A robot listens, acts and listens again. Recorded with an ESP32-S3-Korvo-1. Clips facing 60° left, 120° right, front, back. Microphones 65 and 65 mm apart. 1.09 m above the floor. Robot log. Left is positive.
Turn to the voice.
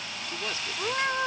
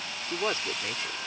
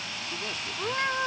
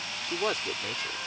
note: The man speaking: 175° right.
cmd yaw -175
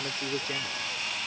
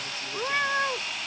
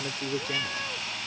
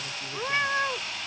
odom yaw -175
note: The man speaking is now 10° left.
cmd yaw +10
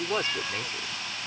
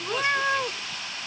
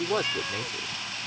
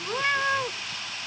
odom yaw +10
end: Found it: a man speaking, straight ahead.